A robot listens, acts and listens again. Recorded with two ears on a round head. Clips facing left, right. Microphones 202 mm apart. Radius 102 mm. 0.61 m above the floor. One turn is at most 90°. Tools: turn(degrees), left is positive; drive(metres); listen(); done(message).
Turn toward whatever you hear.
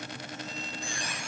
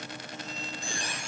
turn(degrees=-30)
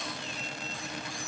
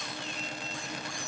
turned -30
listen()
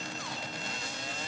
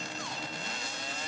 listen()
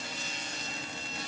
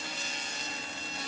done("I heard a squeak, but can't make it out now. It was about straight ahead or 120° right.")